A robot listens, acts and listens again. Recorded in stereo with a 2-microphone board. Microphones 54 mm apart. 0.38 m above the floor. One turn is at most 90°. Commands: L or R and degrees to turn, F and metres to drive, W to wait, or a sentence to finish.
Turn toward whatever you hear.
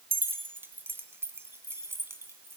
R50
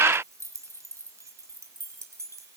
R65
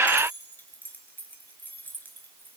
L35
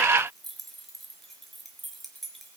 Found it: keys jangling, straight ahead, 2 to 4 m away.